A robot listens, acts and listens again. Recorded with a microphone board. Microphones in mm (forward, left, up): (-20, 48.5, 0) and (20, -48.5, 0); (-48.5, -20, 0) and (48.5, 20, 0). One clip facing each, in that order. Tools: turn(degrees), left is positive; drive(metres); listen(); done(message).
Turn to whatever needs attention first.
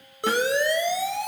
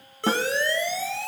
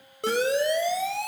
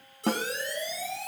turn(degrees=-175)
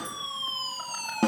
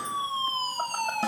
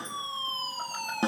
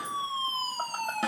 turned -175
turn(degrees=-25)
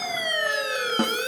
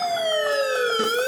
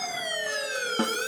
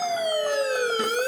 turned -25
turn(degrees=-15)
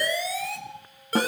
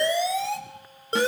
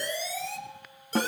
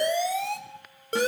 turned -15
done("Found it: a siren, straight ahead, over 4 m away.")